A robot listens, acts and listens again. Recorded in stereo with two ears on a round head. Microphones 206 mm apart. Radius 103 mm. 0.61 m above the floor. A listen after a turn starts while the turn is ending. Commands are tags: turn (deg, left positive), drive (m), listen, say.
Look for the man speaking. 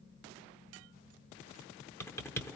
<listen/>
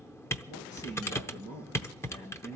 <turn deg="50"/>
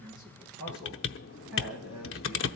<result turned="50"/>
<say>Facing the man speaking, over 4 m away.</say>